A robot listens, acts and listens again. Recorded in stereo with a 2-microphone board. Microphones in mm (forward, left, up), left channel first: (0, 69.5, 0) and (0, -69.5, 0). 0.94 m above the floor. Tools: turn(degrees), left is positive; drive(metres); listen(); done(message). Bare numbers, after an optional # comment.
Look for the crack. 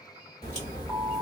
# The crack: about 45° left or 135° left.
turn(45)
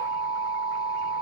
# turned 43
listen()
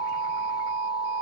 done("I heard a crack, but can't make it out now. It was about 5° left or 90° left.")